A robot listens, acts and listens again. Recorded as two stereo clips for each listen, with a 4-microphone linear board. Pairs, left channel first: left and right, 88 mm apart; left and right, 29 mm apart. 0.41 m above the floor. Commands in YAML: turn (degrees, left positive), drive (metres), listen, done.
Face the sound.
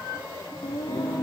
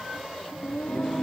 turn: 65
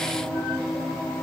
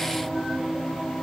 turn: 10
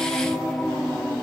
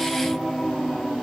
done: "Facing the singing."